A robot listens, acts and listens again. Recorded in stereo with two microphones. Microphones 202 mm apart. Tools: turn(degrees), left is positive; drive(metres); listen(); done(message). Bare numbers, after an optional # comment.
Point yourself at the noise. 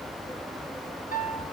# The piano: about 45° left or 135° left.
turn(45)
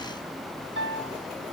# So it is at 90° left.
turn(90)
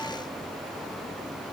listen()
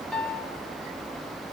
done("Found it: a piano, straight ahead.")